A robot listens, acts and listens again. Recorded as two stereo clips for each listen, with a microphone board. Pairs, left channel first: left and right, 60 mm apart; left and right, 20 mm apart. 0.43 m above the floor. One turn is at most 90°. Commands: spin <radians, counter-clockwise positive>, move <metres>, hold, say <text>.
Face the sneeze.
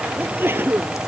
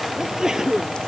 spin -0.70
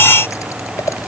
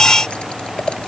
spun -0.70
hold
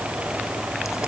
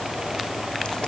say I heard a sneeze, but can't make it out now. It was about straight ahead or 100° right.